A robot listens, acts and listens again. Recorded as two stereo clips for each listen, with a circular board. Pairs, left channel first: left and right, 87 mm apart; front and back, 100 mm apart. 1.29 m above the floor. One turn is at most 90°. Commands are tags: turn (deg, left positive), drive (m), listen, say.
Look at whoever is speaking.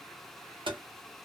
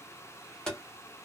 <listen/>
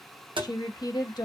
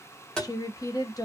<turn deg="50"/>
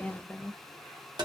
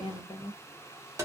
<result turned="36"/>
<turn deg="15"/>
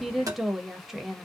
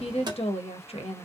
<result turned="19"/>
<say>Found it: a woman speaking, straight ahead.</say>